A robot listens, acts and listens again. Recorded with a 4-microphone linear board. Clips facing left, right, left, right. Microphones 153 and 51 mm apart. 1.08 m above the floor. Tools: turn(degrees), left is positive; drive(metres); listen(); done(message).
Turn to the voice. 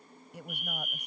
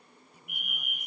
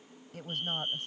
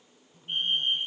turn(degrees=70)
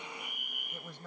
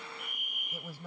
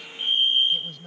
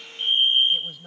turn(degrees=-10)
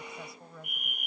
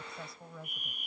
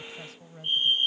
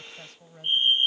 done("Facing the woman speaking.")